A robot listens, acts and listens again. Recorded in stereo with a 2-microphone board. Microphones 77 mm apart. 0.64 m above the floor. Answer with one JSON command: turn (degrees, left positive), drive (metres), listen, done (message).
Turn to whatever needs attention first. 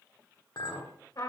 {"listen": true}
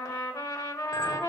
{"listen": true}
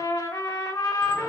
{"done": "I can't make out anything urgent to turn to."}